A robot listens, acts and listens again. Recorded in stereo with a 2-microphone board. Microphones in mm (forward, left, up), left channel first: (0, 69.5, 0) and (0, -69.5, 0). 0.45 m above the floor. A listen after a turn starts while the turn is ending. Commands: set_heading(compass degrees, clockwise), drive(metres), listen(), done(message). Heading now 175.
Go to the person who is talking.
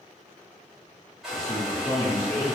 set_heading(140)
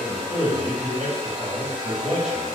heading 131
drive(1.0)
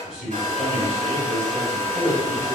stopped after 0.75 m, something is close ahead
done("Arrived at the man speaking, straight ahead.")